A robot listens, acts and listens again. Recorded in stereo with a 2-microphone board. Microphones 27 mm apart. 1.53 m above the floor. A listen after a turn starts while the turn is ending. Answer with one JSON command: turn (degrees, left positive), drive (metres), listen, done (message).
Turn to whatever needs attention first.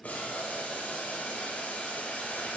{"listen": true}
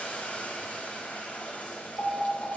{"turn": 45}
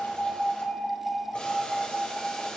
{"turn": 90}
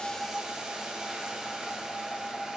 {"turn": 25}
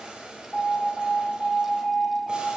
{"turn": 10}
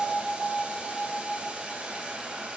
{"done": "Facing the alarm."}